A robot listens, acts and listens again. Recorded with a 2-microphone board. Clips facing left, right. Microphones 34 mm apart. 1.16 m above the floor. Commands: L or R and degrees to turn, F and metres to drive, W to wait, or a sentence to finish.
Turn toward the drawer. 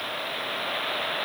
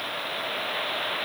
W
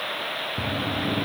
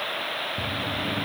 L25
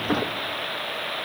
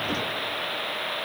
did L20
L130
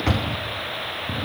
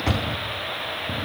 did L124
Found it: a drawer, straight ahead.